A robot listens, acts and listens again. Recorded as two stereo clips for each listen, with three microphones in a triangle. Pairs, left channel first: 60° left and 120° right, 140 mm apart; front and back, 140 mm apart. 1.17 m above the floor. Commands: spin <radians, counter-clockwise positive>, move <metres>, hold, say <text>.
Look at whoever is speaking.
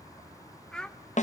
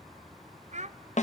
spin 2.53
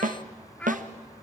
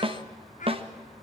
spin -0.35
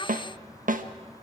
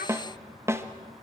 hold
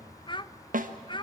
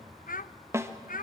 say Found it: a child speaking, straight ahead.